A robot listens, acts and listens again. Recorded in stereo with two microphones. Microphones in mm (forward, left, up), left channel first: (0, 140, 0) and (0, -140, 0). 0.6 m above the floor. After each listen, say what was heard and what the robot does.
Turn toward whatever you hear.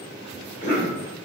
The cough: about 40° left or 140° left. Turn 40° left.
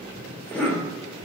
Facing the cough.